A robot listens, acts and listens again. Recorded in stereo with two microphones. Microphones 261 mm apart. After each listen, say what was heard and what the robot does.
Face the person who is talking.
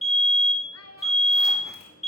The child speaking: about 65° left or 115° left. Turn 65° left.
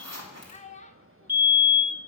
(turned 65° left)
So it is at 30° left. Turn 30° left.
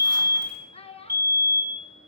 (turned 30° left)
The child speaking is now 25° left. Turn 25° left.
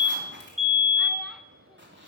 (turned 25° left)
Keep listening.
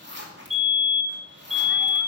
Keep listening.
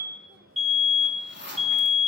Facing where the child speaking came from. I can't hear it now.